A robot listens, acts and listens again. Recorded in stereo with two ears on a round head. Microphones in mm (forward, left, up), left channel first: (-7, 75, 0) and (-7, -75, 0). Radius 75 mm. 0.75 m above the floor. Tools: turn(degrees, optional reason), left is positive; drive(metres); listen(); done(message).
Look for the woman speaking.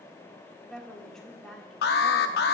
turn(degrees=30)
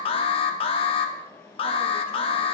listen()
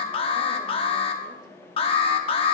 listen()
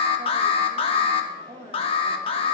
turn(degrees=-30, reason="So it is at 30° right.")
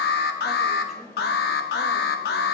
listen()
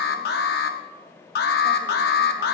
listen()
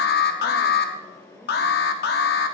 done("I heard a woman speaking from this way, but can't make it out now.")